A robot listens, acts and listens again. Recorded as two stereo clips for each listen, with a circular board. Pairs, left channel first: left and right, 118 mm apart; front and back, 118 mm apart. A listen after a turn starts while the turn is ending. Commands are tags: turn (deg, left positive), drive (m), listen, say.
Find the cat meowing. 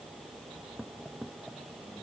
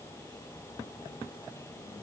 <listen/>
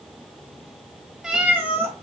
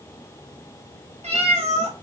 <turn deg="-160"/>
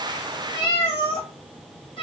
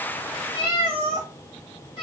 <turn deg="45"/>
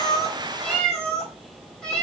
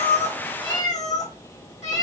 <say>Found it: a cat meowing, straight ahead.</say>